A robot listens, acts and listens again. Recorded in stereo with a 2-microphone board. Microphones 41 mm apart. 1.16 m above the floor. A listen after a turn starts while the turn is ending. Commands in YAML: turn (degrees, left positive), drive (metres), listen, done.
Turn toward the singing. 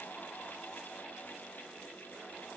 listen: true
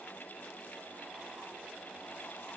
listen: true
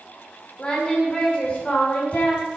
turn: 30
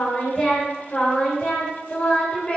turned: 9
turn: 25
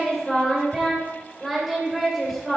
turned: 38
turn: -10
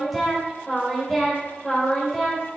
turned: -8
done: "Found it: singing, straight ahead, 2 to 4 m away."